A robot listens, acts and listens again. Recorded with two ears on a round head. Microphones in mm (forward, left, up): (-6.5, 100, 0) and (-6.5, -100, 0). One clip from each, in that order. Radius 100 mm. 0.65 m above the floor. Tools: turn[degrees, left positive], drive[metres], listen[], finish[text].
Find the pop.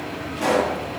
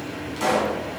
Action: turn[-90]
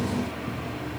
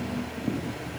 Action: finish[I heard a pop from this way, but can't make it out now.]